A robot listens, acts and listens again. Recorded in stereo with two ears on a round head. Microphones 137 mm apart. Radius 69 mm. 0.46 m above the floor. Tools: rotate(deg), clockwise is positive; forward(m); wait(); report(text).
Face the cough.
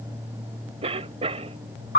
rotate(40)
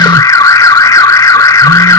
wait()
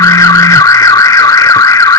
wait()
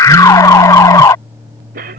rotate(90)
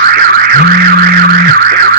wait()
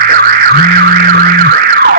wait()
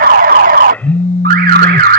report("I heard a cough from this way, but can't make it out now.")